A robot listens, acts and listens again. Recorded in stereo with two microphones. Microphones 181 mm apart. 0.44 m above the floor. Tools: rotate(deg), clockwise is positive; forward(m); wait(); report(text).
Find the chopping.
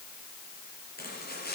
rotate(-60)
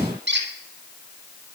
wait()
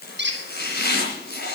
rotate(-60)
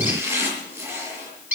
rotate(15)
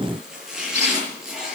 report("Found it: chopping, straight ahead.")